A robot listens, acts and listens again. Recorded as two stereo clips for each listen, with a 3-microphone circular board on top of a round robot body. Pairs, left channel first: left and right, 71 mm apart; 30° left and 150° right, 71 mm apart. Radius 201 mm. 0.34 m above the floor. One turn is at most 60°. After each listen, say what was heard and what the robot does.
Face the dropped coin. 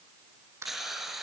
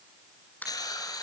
The dropped coin: 40° right. Turn 40° right.
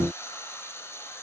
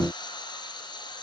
I heard a dropped coin from this way, but can't make it out now.